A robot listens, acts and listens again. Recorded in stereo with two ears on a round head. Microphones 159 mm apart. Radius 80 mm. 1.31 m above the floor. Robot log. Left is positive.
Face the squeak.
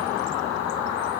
cmd idle
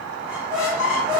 cmd yaw -30
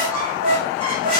note: So it is at 145° right.
cmd yaw -145
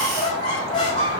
note: The squeak is now 25° left.
cmd yaw +25
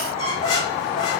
note: The squeak is now 25° left.
cmd yaw +25
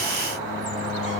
cmd idle
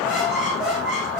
end: Found it: a squeak, straight ahead, over 4 m away.